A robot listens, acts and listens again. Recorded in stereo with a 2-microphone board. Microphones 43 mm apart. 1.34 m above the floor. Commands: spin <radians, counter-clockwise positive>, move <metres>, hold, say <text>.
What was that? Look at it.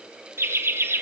spin -1.22
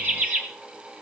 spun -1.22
spin -0.70
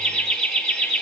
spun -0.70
spin 0.17
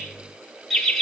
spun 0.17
say Facing the laughter, 1 to 2 m away.